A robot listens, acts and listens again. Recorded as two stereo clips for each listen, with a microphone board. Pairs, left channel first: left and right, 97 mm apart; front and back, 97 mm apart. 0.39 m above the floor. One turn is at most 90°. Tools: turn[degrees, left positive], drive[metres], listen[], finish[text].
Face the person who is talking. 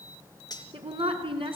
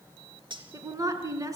Thought: The woman speaking: 120° right.
Action: turn[-90]
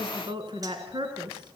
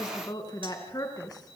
Thought: The woman speaking is now 50° right.
Action: turn[-50]
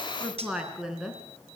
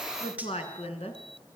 Action: finish[Found it: a woman speaking, straight ahead, over 4 m away.]